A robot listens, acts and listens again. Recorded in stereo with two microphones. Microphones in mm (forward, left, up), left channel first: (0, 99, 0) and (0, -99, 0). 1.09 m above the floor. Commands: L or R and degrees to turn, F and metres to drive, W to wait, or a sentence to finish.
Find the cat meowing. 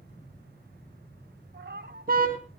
R65
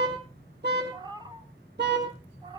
R25
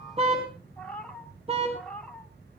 Found it: a cat meowing, straight ahead, 1 to 2 m away.